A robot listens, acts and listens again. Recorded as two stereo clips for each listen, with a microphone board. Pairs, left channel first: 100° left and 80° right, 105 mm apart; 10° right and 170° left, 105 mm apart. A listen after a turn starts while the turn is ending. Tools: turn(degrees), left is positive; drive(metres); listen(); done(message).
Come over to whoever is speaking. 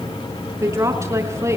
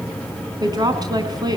turn(degrees=-140)
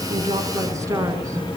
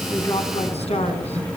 listen()
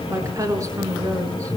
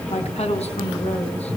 turn(degrees=-20)
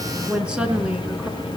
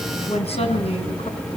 drive(metres=1.0)
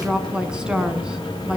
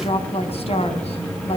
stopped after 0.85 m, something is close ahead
done("Something is in my way. I am facing the woman speaking but have not reached it.")